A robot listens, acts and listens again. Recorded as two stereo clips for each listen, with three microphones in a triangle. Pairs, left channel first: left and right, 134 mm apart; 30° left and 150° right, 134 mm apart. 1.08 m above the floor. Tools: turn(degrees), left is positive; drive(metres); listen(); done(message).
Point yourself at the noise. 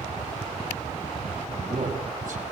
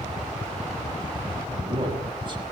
turn(degrees=-95)
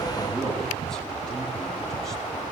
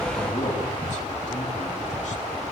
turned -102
done("Facing the man speaking, over 4 m away.")